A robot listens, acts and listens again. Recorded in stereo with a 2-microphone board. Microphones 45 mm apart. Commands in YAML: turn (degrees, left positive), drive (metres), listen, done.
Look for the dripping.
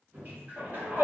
turn: -45
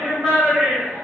listen: true
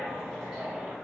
listen: true
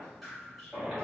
done: "Found it: dripping, straight ahead, 1 to 2 m away."